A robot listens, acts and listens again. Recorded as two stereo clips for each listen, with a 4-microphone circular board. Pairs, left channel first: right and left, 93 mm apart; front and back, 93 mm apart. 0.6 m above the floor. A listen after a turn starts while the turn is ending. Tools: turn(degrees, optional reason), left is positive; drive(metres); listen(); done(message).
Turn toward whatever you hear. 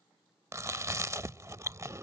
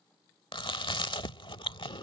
turn(degrees=30, reason="The chewing: 30° left.")
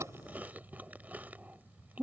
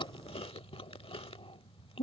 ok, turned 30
turn(degrees=15, reason="The chewing is now 15° left.")
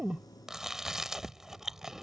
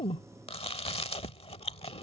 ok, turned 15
done("Facing the chewing.")